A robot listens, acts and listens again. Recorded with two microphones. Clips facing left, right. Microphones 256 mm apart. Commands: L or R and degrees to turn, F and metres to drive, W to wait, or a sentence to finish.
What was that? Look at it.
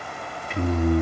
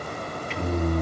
L55
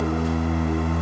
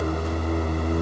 L65
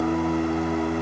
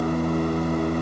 L10
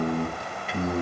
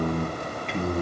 Facing the singing, 2 to 4 m away.